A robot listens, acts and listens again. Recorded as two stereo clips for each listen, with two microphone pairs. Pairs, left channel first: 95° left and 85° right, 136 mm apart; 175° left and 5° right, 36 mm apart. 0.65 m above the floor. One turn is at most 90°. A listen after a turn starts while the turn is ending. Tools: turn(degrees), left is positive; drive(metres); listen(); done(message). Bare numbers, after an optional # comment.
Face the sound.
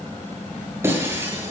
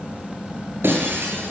# The breaking glass: 10° right.
turn(-10)
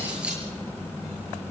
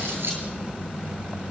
done("I heard breaking glass from this way, but can't make it out now.")